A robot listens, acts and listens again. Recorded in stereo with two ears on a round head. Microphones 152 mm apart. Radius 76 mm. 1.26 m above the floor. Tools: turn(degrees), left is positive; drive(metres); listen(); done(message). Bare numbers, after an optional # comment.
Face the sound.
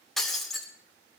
turn(30)
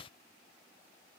listen()
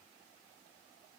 done("I heard breaking glass, but can't make it out now. It was about 30° right or 150° left.")